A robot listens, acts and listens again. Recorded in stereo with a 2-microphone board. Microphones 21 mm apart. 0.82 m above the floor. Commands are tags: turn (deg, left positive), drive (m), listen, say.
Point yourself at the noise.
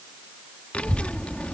<turn deg="70"/>
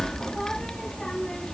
<turn deg="30"/>
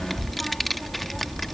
<turn deg="10"/>
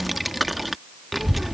<say>Found it: a child speaking, straight ahead.</say>